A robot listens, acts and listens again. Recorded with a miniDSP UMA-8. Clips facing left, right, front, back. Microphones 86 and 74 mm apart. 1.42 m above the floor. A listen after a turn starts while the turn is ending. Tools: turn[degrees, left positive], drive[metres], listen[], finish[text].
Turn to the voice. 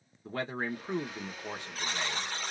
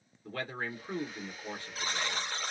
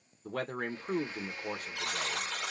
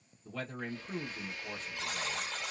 Thought: The man speaking: 25° left.
Action: turn[25]
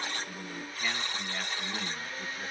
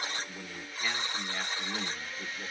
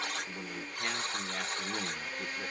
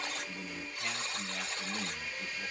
Action: listen[]
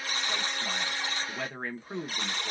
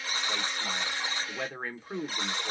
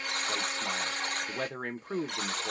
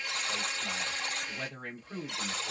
Action: finish[Found it: a man speaking, straight ahead.]